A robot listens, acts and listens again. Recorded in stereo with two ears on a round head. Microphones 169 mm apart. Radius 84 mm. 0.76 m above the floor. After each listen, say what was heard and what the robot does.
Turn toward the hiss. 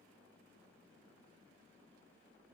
Keep listening.
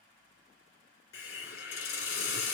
The hiss: about 55° left or 125° left. Turn 55° left.
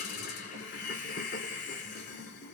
So it is at 60° left. Turn 60° left.
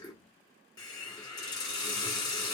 The hiss is now 25° left. Turn 25° left.
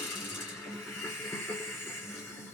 The hiss is now 15° left. Turn 15° left.
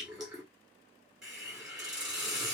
Found it: a hiss, straight ahead.